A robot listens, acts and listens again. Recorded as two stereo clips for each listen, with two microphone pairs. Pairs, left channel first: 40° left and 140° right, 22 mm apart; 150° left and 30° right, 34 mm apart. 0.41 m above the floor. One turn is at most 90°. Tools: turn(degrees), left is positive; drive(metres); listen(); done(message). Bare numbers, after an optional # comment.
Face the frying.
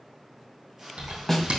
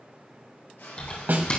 # The frying: 150° left.
turn(90)
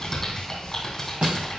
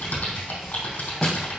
# Nothing new. It was at 60° left.
turn(60)
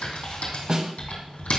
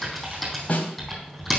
listen()
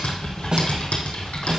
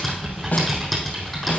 done("Facing where the frying came from. I can't hear it now.")